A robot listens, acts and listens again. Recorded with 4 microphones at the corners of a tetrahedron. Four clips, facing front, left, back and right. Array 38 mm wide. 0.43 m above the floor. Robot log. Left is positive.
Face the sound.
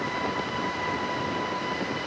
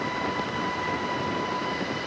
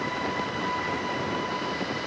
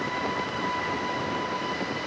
cmd idle
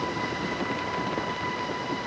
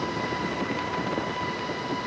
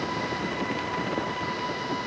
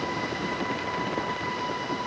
cmd idle
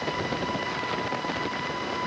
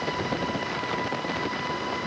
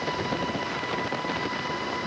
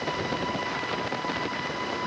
end: I can't make out anything.